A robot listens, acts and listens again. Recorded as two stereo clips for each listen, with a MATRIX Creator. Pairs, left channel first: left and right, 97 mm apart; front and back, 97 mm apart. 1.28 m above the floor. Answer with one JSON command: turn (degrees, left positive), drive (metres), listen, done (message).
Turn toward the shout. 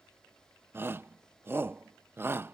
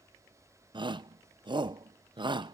{"turn": -155}
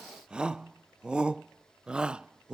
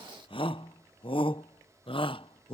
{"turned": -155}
{"turn": -10}
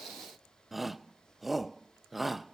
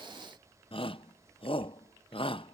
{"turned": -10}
{"done": "Facing the shout."}